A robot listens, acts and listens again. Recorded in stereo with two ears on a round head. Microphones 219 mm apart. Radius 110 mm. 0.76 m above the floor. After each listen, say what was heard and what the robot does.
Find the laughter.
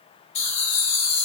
The laughter: about 20° left or 160° left. Turn 20° left.
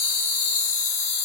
The laughter: about 25° left or 155° left. Turn 25° left.
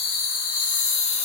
The laughter: about 25° left or 155° left. Turn 25° left.
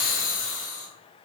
The laughter: about 30° left or 150° left. Turn 30° left.
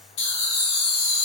So it is at 140° left. Turn 140° left.
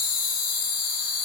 The laughter is now 35° left. Turn 35° left.
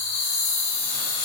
The laughter is now 25° left. Turn 25° left.
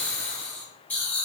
Found it: laughter, straight ahead, 1 to 2 m away.